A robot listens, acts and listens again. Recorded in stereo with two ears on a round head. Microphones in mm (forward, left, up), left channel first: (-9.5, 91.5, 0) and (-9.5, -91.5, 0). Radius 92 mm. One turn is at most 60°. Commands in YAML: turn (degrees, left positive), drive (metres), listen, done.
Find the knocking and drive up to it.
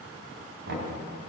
turn: -60
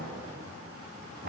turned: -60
turn: -50
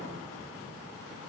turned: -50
listen: true
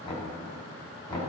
turn: 25
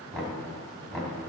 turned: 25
drive: 1.0
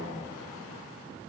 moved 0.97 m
listen: true
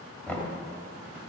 turn: 10
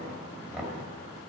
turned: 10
drive: 1.0
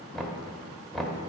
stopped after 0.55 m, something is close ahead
done: "I am next to the knocking."